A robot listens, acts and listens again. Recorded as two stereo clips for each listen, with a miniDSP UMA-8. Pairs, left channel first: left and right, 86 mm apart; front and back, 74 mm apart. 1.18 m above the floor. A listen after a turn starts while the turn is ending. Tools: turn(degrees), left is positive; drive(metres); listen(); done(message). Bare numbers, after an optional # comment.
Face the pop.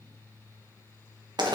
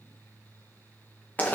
listen()
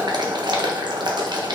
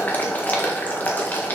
listen()
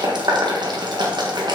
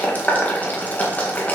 done("I can't make out a pop to turn to.")